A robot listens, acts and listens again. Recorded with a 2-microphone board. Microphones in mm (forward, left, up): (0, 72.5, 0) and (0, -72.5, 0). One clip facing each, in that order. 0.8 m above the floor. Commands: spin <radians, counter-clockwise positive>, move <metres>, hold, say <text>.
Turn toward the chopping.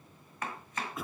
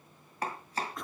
spin -0.61
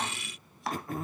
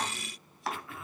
say Found it: chopping, straight ahead.